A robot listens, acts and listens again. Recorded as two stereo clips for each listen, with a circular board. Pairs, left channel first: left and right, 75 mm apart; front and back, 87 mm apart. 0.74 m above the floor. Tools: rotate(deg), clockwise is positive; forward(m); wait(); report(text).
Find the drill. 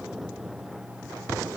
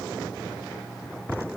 wait()
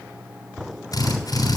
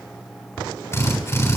rotate(-55)
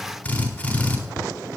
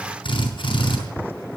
rotate(-15)
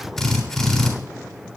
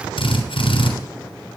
report("Found it: a drill, straight ahead.")